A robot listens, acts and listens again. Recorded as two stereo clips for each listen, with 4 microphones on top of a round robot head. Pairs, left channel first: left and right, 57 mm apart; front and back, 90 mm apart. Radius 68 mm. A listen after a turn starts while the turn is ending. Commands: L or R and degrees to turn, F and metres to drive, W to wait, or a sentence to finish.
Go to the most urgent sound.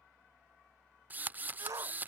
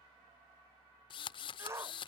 R115
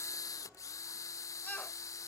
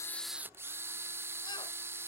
W
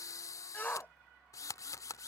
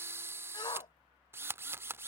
L30
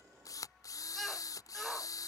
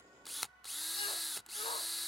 W
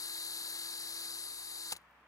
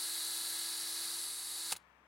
W
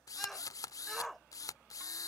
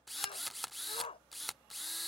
F1.0
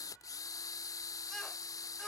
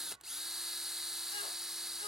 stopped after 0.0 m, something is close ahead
W
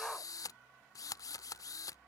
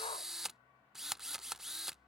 L10
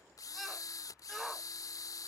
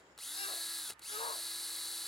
Blocked. The shout is further on, straight ahead.